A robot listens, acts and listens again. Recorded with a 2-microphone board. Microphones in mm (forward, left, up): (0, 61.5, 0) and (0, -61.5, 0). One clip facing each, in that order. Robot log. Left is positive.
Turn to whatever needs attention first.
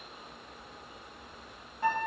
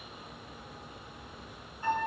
cmd idle
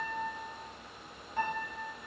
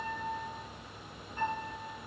cmd idle
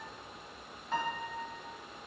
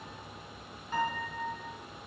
end: I can't make out anything urgent to turn to.